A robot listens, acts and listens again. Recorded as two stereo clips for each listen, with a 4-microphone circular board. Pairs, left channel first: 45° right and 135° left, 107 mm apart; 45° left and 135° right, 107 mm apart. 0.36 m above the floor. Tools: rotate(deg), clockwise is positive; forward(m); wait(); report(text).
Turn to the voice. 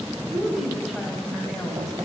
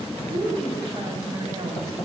rotate(135)
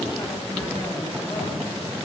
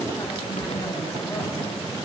wait()
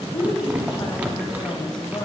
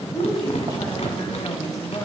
report("Facing the woman speaking, 1 to 2 m away.")